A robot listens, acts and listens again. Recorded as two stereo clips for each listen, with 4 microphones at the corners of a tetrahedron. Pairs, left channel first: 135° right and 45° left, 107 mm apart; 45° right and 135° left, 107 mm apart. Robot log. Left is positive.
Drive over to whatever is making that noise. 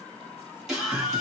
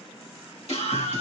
note: The scream: 40° right.
cmd yaw -40
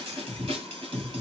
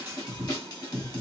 cmd fwd 1.0
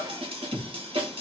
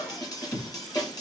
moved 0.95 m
note: The scream is now 10° left.
cmd yaw +10
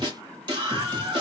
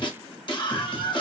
cmd fwd 1.0
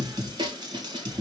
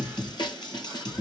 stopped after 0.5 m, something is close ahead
end: I am next to the scream.